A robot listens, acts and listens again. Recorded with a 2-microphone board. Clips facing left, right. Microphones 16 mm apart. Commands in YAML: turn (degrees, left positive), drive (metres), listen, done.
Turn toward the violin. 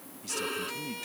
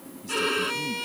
turn: -25
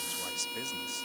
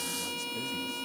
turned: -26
done: "Found it: a violin, straight ahead."